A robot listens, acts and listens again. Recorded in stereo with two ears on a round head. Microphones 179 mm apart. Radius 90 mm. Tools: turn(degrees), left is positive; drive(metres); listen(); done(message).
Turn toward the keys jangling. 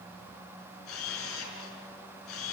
listen()
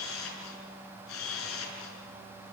listen()
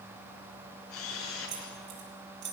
turn(degrees=-60)
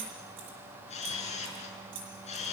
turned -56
turn(degrees=-65)
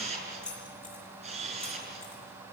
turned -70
done("Found it: keys jangling, straight ahead.")